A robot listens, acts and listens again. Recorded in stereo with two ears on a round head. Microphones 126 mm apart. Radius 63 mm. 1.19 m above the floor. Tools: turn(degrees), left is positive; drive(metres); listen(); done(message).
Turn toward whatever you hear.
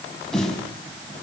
turn(degrees=30)
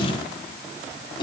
turn(degrees=145)
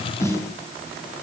turn(degrees=20)
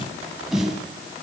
done("Facing the snare drum.")